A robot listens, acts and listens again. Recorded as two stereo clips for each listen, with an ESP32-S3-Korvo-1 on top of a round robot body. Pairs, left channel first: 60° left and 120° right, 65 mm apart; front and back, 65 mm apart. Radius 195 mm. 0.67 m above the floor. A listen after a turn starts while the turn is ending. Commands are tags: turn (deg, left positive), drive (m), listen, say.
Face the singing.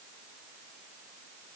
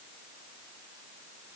<listen/>
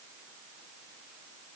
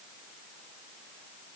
<listen/>
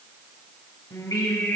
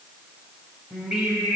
<turn deg="105"/>
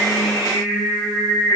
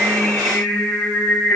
<turn deg="50"/>
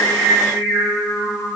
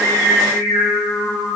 <say>Facing the singing.</say>